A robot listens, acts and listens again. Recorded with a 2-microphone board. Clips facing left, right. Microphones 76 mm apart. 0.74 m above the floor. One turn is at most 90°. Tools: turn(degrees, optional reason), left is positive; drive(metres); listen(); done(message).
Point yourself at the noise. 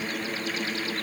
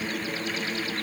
listen()
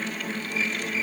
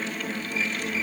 listen()
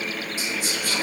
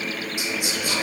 turn(degrees=-15, reason="The whispering: about 15° right or 165° right.")
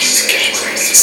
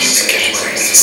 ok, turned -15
done("Found it: whispering, straight ahead.")